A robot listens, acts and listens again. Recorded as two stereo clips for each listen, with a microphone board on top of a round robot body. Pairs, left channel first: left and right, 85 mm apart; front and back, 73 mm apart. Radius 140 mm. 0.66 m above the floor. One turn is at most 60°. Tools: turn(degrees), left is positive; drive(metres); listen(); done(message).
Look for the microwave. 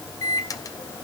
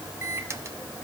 turn(degrees=60)
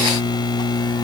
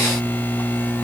turn(degrees=60)
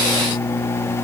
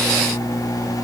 turn(degrees=35)
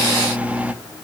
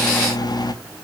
turn(degrees=-15)
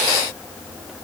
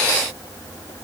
listen()
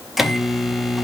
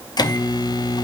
done("Found it: a microwave, straight ahead.")